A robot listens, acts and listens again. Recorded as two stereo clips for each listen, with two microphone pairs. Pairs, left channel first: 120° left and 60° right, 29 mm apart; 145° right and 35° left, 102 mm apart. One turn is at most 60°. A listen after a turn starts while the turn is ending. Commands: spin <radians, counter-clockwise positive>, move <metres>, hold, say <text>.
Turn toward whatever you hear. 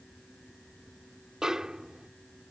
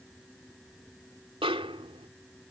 spin 0.17
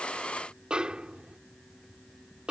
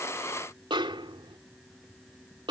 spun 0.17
say Facing the snare drum.